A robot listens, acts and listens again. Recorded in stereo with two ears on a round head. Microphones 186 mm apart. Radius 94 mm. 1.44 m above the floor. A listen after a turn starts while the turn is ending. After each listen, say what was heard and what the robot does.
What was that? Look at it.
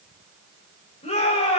The shout: about 30° left or 150° left. Turn 30° left.
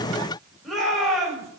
Facing the shout.